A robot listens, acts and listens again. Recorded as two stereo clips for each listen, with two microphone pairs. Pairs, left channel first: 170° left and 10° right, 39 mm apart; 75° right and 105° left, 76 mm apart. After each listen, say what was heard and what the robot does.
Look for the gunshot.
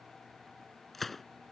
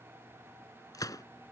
The gunshot: 110° right. Turn 110° right.
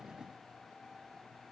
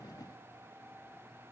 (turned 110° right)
Facing where the gunshot came from. I can't hear it now.